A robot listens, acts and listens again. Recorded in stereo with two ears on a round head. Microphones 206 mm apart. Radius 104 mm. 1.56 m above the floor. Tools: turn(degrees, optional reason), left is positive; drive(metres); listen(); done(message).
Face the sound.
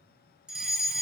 turn(degrees=-30)
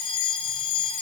turn(degrees=25, reason="So it is at 25° left.")
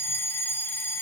turn(degrees=10, reason="The fire alarm is now 10° left.")
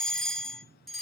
done("Facing the fire alarm.")